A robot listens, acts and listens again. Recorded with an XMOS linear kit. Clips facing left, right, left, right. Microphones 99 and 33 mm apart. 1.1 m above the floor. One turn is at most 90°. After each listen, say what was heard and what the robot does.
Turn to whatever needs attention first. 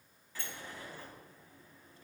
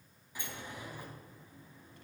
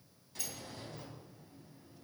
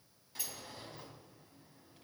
Keep listening.
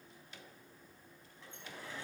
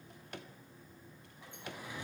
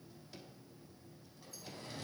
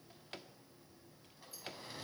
Keep listening.
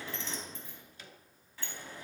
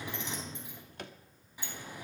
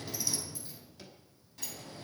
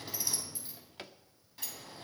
I can't make out anything urgent to turn to.